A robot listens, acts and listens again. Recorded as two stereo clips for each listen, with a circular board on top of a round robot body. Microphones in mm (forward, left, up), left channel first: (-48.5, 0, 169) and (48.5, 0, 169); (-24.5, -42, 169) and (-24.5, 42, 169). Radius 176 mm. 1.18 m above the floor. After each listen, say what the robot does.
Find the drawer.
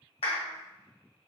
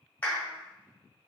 Keep listening.
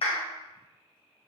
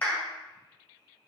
Keep listening.
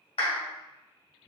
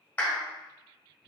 I can't make out a drawer, only a clap.